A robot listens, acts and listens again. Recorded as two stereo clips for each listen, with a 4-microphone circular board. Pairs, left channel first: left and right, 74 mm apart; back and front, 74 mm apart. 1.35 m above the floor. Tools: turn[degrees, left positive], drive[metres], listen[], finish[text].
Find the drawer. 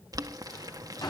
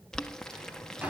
Thought: The drawer: 70° left.
Action: turn[70]
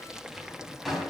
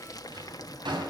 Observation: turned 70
Action: finish[Found it: a drawer, straight ahead.]